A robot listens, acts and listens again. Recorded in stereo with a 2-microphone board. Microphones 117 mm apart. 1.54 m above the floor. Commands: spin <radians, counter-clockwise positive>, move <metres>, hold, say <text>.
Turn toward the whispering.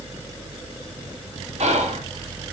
spin -1.57
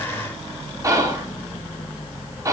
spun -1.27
spin -0.52
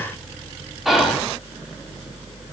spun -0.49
say Facing the whispering.